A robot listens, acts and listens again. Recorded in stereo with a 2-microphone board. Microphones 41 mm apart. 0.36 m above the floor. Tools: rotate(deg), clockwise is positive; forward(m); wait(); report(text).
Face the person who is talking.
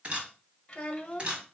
rotate(-30)
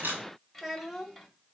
report("Facing the child speaking.")